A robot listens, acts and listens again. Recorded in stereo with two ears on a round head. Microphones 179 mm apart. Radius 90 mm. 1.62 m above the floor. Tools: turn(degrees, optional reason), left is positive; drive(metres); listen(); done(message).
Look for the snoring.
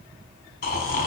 turn(degrees=50, reason="The snoring: about 50° left or 130° left.")
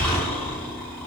turn(degrees=15, reason="So it is at 15° left.")
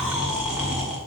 done("Found it: snoring, straight ahead, 2 to 4 m away.")